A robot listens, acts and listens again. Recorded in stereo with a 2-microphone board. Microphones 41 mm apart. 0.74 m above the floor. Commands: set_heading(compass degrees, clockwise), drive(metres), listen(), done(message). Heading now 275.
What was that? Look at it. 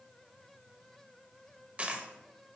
set_heading(305)
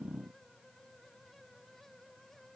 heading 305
listen()
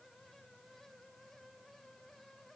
done("I heard a dropped coin, but can't make it out now. It was about straight ahead or 120° right.")